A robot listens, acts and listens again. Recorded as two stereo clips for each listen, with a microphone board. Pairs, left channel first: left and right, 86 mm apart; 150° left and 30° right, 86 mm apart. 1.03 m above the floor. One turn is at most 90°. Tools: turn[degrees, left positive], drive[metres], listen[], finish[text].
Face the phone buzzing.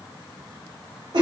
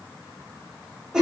Action: listen[]
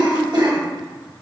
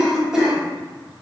Action: listen[]
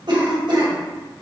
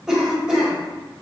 Action: finish[I can't make out a phone buzzing to turn to.]